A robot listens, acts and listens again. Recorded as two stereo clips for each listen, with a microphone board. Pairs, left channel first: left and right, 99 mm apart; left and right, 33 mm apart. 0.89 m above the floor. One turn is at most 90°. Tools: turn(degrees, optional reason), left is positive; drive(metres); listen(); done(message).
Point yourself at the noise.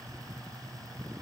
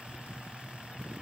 listen()
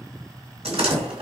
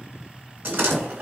turn(degrees=-90)
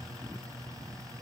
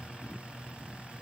done("Facing where the door slam came from. I can't hear it now.")